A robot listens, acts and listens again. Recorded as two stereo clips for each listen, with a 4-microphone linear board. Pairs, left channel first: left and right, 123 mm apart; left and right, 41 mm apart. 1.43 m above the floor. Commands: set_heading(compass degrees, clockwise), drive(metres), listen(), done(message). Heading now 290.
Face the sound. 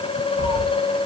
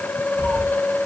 set_heading(310)
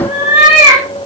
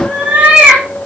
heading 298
set_heading(333)
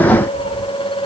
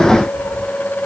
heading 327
listen()
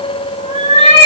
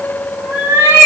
set_heading(77)
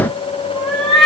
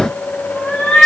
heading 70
done("Found it: a cat meowing, straight ahead, over 4 m away.")